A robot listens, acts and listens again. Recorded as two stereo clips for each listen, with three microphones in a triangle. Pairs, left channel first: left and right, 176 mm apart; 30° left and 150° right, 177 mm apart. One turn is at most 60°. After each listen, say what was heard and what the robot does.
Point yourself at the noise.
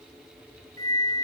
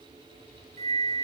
The flute: 165° left. Turn 60° left.
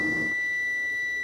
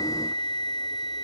The flute is now 95° left. Turn 60° left.
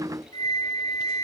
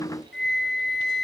The flute is now 25° left. Turn 25° left.
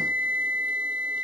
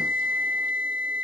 The flute is now 10° right. Turn 10° right.
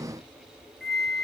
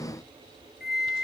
Facing the flute, under 1 m away.